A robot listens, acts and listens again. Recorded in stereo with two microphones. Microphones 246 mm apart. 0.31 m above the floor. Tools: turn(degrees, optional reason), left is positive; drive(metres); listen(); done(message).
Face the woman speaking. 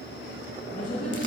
turn(degrees=30, reason="The woman speaking: about 30° left or 150° left.")
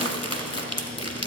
listen()
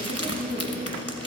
done("Found it: a woman speaking, straight ahead, 2 to 4 m away.")